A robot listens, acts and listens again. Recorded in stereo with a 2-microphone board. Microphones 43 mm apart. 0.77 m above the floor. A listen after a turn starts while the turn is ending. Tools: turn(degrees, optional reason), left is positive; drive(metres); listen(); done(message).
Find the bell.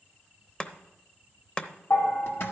turn(degrees=55, reason="The bell: about 55° left or 125° left.")
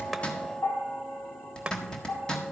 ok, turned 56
turn(degrees=65, reason="So it is at 65° left.")
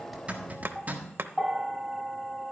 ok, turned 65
done("Found it: a bell, straight ahead.")